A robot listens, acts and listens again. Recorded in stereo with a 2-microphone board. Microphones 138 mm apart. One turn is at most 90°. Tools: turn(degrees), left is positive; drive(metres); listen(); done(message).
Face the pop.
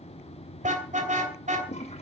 listen()
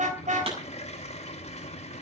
turn(degrees=-45)
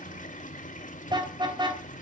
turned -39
listen()
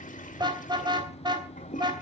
done("I heard a pop, but can't make it out now. It was about 5° right or 95° right.")